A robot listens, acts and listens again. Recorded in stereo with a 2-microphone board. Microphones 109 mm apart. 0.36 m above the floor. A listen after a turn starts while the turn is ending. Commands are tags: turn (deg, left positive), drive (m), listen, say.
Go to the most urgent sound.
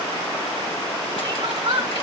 <turn deg="-55"/>
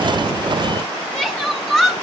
<drive m="1.0"/>
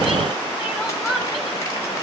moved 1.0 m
<drive m="1.0"/>
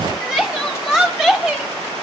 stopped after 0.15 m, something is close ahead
<say>I am next to the crying.</say>